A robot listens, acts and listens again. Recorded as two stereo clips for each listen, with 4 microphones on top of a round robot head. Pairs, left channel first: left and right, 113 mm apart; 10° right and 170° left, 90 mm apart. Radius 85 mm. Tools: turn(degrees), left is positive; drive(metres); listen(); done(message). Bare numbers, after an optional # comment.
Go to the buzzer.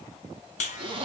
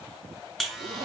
# The buzzer: 80° left.
turn(80)
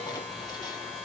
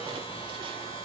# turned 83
drive(1.0)
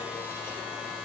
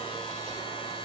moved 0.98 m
# The buzzer is now 10° right.
turn(-10)
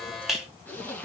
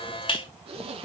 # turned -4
drive(1.0)
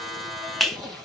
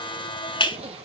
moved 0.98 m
drive(1.0)
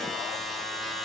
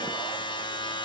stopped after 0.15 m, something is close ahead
done("Arrived at the buzzer, straight ahead.")